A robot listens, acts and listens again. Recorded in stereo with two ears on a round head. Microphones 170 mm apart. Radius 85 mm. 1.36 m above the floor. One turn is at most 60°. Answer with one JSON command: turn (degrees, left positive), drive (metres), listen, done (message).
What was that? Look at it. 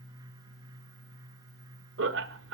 {"turn": -60}
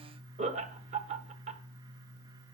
{"turn": -40}
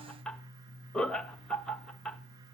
{"done": "Facing the laughter, 1 to 2 m away."}